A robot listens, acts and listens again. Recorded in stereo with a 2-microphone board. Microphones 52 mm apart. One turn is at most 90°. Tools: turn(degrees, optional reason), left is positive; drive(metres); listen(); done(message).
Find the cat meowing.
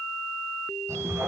turn(degrees=-65, reason="The cat meowing: about 65° right or 115° right.")
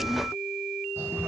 turn(degrees=-50, reason="So it is at 50° right.")
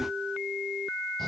listen()
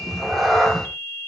done("Facing the cat meowing, over 4 m away.")